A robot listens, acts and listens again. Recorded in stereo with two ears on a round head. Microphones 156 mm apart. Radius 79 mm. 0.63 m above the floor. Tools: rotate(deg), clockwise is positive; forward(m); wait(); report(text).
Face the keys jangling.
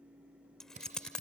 rotate(-30)
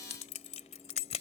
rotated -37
rotate(-140)
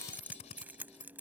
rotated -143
rotate(10)
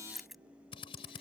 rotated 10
report("Facing the keys jangling.")